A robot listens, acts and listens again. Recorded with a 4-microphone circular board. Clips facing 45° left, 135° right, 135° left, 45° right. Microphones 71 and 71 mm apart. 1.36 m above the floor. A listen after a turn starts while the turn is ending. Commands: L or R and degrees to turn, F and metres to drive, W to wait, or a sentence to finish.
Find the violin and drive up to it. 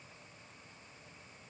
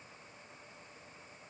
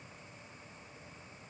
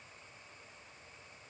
W
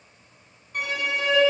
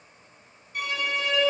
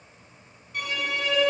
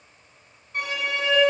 L15
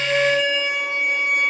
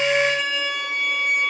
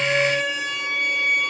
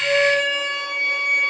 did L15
F1.0
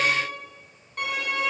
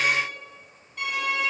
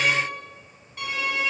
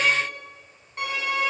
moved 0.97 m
L10
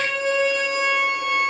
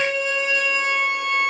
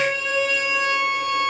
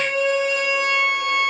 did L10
F1.0
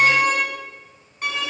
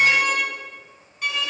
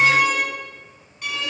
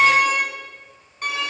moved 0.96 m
F1.0
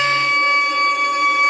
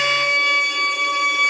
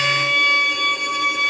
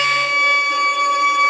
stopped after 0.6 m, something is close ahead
I am next to the violin.